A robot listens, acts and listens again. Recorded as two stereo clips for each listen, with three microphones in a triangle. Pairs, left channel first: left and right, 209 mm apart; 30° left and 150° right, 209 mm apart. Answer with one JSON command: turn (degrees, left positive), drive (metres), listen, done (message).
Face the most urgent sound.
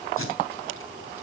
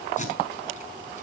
{"listen": true}
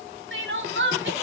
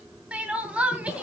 {"turn": -65}
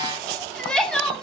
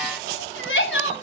{"done": "Facing the crying, 2 to 4 m away."}